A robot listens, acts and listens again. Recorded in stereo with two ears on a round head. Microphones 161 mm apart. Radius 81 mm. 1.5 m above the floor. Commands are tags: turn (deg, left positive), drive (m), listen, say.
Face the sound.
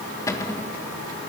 <turn deg="15"/>
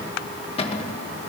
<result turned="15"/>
<turn deg="145"/>
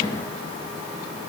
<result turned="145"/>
<turn deg="25"/>
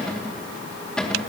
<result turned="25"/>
<say>Found it: a cupboard door, straight ahead.</say>